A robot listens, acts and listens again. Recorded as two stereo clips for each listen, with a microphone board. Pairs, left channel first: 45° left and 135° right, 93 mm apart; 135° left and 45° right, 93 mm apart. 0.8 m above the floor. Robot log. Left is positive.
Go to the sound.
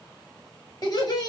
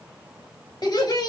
note: The laughter: 90° left.
cmd yaw +90
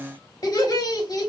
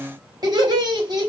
cmd fwd 1.0
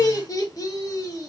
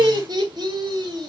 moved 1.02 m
cmd fwd 1.0
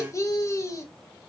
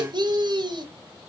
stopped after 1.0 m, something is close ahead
note: The laughter is now 10° right.
cmd yaw -10
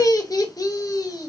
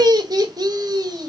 end: Arrived at the laughter, straight ahead.